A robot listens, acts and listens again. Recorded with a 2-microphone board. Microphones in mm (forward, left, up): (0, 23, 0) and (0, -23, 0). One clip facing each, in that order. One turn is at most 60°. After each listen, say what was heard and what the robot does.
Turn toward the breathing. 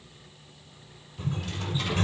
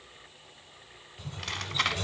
Keep listening.
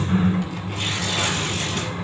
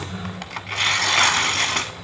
Keep listening.
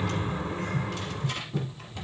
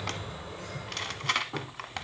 I can't make out breathing, only a sliding door and tearing paper.